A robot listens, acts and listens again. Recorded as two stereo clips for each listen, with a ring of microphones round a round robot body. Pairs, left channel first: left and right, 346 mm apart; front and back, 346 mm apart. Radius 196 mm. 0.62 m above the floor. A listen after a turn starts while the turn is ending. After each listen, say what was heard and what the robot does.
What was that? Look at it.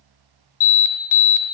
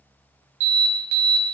The alarm: 115° left. Turn 115° left.
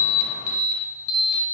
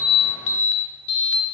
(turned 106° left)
The alarm is now 10° left. Turn 10° left.
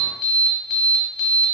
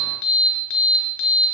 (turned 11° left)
Facing the alarm.